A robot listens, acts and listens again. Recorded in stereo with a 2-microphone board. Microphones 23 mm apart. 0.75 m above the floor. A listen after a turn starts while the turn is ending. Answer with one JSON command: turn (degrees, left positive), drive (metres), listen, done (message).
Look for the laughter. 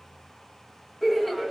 {"turn": 30}
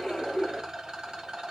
{"turn": 140}
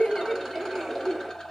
{"turn": -20}
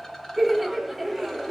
{"done": "Facing the laughter, under 1 m away."}